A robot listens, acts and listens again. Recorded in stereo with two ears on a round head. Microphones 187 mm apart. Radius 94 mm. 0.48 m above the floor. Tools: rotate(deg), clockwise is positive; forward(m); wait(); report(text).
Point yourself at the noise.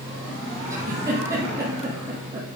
rotate(15)
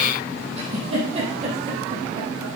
rotate(150)
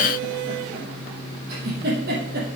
rotate(45)
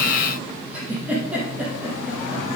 report("Facing the giggle.")